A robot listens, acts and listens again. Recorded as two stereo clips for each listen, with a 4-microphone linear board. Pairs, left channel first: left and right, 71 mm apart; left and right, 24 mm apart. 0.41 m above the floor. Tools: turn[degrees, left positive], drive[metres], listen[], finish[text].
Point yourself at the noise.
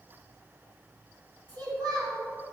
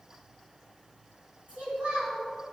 Thought: The child speaking: about 75° right or 105° right.
Action: turn[-75]
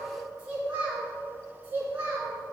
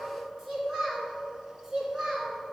Thought: So it is at 25° right.
Action: turn[-25]
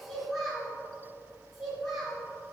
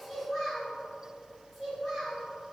Action: finish[Facing the child speaking, over 4 m away.]